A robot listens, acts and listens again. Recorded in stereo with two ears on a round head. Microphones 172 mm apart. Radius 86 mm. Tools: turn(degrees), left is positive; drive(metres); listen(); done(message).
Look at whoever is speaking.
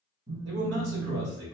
turn(degrees=-60)
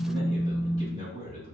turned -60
turn(degrees=-35)
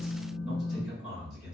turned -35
done("Facing the man speaking.")